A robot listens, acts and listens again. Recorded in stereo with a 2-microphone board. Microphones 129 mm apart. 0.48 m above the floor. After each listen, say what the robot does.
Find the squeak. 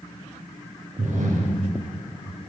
Keep listening.
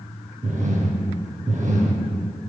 Keep listening.
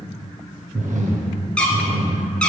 Turn 30° left.
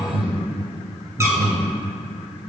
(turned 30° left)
Keep listening.
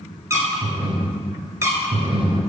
Turn 25° right.
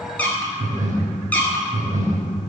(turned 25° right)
Turn 10° left.
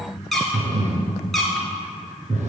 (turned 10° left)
Facing the squeak.